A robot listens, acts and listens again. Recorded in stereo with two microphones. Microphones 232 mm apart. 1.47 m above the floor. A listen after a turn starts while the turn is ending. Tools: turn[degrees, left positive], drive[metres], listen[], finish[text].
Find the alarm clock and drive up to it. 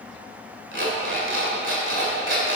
Thought: The alarm clock: about 55° right or 125° right.
Action: turn[-55]
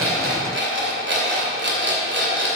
Thought: So it is at 60° right.
Action: turn[-60]
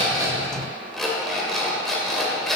Action: drive[1.0]
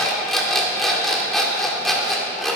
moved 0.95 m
Action: drive[1.0]
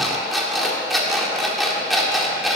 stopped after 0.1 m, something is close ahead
Action: finish[Arrived at the alarm clock, straight ahead.]